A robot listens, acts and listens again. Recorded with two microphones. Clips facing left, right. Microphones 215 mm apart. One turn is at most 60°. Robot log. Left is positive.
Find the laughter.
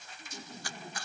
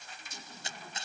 note: The laughter: about 25° left or 155° left.
cmd yaw +25
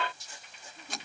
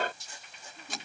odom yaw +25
end: Facing the laughter.